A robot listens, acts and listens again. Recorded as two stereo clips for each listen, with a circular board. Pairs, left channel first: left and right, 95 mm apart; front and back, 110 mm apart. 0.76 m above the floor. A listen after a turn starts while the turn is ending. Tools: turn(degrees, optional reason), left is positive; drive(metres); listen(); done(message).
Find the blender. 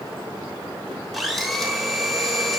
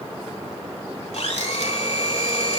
done("Facing the blender, 2 to 4 m away.")